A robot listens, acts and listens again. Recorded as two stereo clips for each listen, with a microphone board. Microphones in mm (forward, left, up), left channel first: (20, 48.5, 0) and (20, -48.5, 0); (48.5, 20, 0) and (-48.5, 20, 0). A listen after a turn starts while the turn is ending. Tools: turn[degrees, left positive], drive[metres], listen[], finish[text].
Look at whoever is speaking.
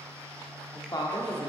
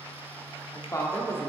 Thought: The woman speaking: 55° left.
Action: turn[55]
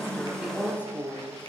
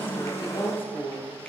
Thought: The woman speaking is now 15° right.
Action: turn[-15]
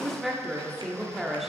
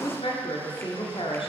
Action: finish[Found it: a woman speaking, straight ahead.]